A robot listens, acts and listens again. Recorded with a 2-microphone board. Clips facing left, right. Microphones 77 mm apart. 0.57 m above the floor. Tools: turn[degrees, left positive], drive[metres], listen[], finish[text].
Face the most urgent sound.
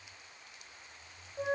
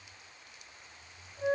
Action: listen[]
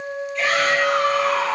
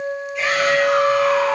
Thought: The shout: about 15° right or 165° right.
Action: turn[-15]
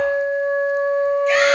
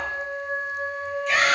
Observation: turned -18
Action: listen[]
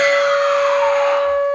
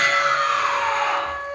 Action: listen[]
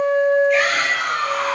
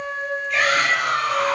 Action: finish[Found it: a shout, straight ahead, 1 to 2 m away.]